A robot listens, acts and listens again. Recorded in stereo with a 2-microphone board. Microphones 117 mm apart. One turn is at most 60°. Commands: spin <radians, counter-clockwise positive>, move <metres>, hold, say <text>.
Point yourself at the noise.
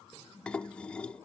spin 0.52
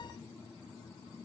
hold
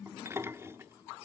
spin -0.44
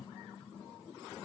hold
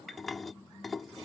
say Found it: dishes clattering, straight ahead.